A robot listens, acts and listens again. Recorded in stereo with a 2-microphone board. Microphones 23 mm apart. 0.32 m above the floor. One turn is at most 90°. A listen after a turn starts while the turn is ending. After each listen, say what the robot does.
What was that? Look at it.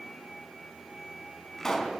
Turn 20° left.
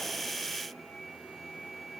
Keep listening.
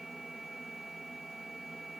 I heard a pop, but can't make it out now. It was about straight ahead or 140° left.